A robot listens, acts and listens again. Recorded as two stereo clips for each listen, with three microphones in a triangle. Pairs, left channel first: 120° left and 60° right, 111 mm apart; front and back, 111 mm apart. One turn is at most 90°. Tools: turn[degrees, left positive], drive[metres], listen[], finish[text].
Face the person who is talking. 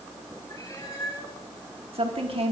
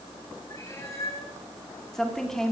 Thought: The woman speaking: 85° right.
Action: turn[-85]
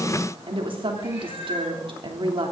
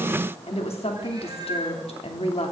Thought: The woman speaking is now 20° right.
Action: turn[-20]
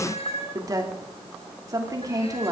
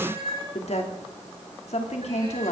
Action: finish[Facing the woman speaking, 2 to 4 m away.]